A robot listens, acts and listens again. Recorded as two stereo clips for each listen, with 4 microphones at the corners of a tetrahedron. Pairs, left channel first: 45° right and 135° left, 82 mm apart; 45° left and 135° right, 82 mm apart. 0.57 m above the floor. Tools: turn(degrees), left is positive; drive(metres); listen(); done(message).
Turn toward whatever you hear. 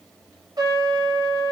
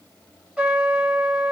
turn(degrees=150)
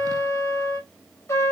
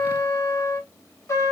done("Found it: a trumpet, straight ahead, 2 to 4 m away.")